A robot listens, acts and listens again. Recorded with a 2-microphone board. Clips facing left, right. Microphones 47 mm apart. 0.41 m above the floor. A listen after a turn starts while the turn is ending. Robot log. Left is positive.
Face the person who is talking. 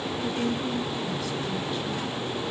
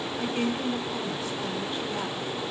note: The woman speaking: about 30° right or 150° right.
cmd yaw -30
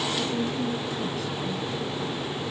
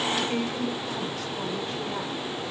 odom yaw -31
note: So it is at 115° right.
cmd yaw -115
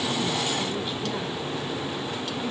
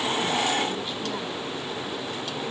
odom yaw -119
cmd idle
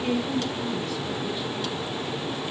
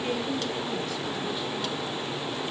end: Found it: a woman speaking, straight ahead.